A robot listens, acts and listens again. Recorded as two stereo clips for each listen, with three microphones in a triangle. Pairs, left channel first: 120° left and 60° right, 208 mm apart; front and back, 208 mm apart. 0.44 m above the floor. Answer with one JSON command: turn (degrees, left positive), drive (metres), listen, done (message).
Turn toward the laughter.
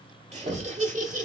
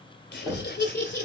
{"turn": -20}
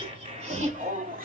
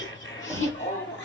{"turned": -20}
{"turn": -20}
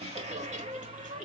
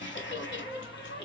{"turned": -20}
{"turn": -15}
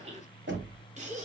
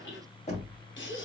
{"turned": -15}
{"turn": -10}
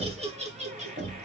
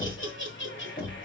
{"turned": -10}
{"done": "Facing the laughter, 2 to 4 m away."}